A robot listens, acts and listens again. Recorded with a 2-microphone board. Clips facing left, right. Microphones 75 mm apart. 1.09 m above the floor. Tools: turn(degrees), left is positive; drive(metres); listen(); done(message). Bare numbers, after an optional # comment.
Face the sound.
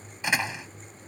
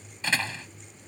# The door slam: about 15° left or 165° left.
turn(15)
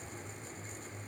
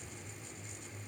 listen()
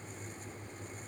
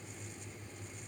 done("I heard a door slam, but can't make it out now. It was about straight ahead or 150° left.")